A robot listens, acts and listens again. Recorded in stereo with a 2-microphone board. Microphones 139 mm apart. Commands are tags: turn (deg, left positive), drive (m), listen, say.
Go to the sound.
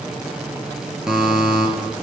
<turn deg="-30"/>
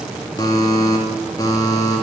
<turn deg="25"/>
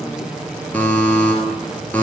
<turn deg="10"/>
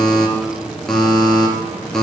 <drive m="1.0"/>
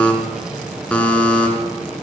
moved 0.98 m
<turn deg="10"/>
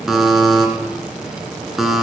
<drive m="1.0"/>
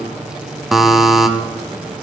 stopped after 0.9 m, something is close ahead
<say>I am next to the buzzer.</say>